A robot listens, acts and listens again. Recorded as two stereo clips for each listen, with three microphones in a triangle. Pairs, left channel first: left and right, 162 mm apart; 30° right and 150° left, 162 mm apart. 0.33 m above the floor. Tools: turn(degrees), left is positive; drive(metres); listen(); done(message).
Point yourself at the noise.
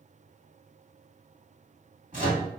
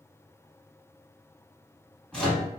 turn(degrees=-115)
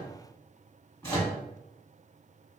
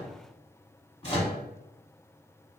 turn(degrees=20)
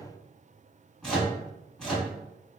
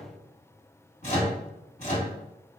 done("Found it: a microwave, straight ahead, 1 to 2 m away.")